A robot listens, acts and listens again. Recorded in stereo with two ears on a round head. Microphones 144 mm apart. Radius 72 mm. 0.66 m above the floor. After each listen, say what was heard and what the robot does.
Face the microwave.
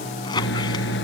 Turn 90° left.
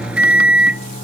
Found it: a microwave, straight ahead.